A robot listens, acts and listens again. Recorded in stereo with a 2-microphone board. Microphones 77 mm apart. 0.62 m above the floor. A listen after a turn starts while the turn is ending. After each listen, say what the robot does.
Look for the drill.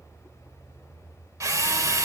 Turn 45° right.
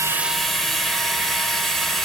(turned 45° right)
Facing the drill, 1 to 2 m away.